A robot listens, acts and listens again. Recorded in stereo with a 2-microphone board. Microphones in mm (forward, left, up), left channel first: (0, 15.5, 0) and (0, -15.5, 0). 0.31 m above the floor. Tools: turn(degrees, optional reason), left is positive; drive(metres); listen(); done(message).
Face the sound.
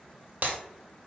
turn(degrees=-55, reason="The breaking glass: about 55° right or 125° right.")
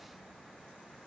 listen()
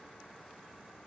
done("I heard breaking glass, but can't make it out now. It was about straight ahead or 70° right.")